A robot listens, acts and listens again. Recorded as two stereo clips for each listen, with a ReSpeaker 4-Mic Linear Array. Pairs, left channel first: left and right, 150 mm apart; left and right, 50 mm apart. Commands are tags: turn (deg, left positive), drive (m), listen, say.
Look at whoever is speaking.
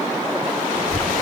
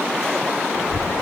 <turn deg="90"/>
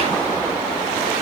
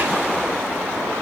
<listen/>
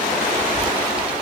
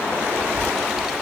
<say>Found it: a child speaking, straight ahead.</say>